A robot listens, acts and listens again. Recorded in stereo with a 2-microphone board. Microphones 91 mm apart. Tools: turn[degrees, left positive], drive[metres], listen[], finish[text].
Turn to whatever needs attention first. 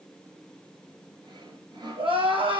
Action: turn[-90]
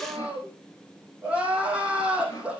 Thought: So it is at 15° right.
Action: turn[-15]
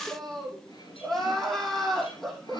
Action: finish[Found it: crying, straight ahead.]